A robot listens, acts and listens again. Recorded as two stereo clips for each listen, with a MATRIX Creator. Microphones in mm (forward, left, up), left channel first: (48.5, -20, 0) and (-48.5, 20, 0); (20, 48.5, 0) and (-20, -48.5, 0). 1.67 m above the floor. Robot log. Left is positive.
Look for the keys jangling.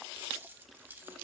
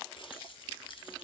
note: The keys jangling: 90° left.
cmd yaw +90
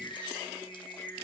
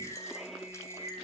cmd idle
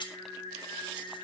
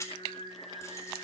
note: The keys jangling is now 10° left.
cmd yaw +10
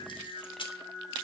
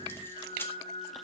end: Facing the keys jangling, 1 to 2 m away.